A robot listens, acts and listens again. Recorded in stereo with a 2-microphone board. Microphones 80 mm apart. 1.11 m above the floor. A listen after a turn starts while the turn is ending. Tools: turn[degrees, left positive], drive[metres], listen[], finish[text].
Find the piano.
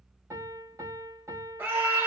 Thought: The piano: about 40° right or 140° right.
Action: turn[-40]
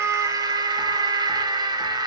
Action: listen[]
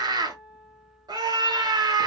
Action: finish[Found it: a piano, straight ahead.]